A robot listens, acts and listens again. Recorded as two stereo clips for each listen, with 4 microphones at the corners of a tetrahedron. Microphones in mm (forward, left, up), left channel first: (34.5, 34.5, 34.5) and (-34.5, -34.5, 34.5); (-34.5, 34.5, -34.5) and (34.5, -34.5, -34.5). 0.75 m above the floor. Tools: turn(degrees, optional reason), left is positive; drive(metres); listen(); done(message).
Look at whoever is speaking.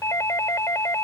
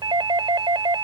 listen()
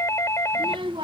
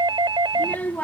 turn(degrees=-155, reason="The child speaking: 155° right.")
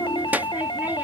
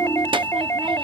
turn(degrees=-65, reason="The child speaking is now 65° right.")
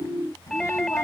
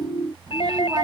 turn(degrees=-10, reason="The child speaking is now 10° right.")
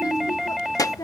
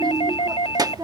done("Found it: a child speaking, straight ahead.")